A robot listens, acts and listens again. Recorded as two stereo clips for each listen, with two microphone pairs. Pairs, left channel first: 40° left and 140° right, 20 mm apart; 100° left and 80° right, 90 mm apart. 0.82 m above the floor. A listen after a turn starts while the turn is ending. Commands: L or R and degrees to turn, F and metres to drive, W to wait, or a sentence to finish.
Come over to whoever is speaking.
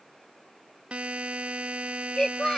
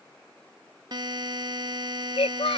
L95
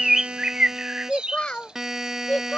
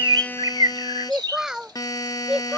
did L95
F1.0
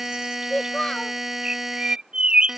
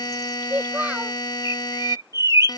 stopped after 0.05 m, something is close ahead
Blocked. The child speaking is further on, straight ahead.